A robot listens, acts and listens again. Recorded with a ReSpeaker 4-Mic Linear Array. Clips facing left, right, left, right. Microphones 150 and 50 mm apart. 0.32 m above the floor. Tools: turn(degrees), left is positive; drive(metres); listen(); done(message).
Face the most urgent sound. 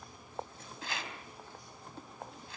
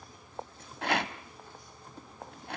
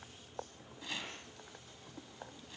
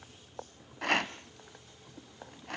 listen()
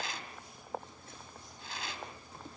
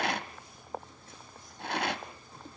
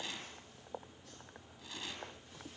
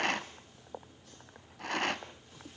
listen()
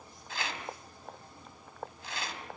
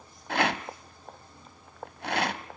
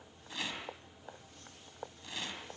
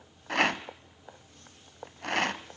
done("I can't make out anything urgent, only a rattle.")